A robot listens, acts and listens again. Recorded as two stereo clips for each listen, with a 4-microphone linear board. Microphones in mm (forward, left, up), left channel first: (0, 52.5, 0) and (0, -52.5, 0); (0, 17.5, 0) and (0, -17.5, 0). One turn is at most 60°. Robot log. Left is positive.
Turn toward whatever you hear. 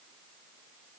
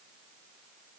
cmd idle
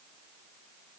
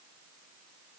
cmd idle
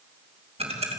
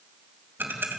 cmd yaw -60
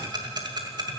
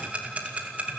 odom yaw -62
note: So it is at 40° right.
cmd yaw -40
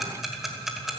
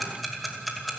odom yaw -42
end: Found it: ticking, straight ahead.